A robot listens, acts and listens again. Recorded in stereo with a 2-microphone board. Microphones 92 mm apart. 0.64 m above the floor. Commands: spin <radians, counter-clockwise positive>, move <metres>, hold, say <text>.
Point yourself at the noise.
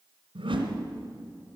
spin -1.31
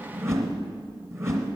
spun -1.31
spin -0.52
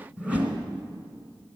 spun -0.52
spin -0.26
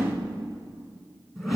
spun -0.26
say Facing the whoosh.